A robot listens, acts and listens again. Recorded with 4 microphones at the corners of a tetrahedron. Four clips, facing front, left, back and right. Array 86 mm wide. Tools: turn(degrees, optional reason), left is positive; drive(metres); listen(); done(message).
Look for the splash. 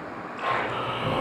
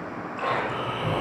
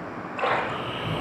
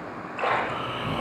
turn(degrees=-135, reason="The splash: 135° right.")
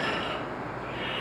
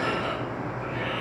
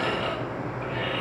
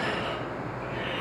done("Facing where the splash came from. I can't hear it now.")